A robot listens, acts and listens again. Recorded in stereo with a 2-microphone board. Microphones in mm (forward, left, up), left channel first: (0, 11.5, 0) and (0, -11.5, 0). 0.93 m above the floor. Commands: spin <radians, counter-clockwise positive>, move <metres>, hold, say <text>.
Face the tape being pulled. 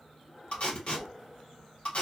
spin 1.05
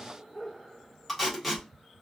say Found it: tape being pulled, straight ahead.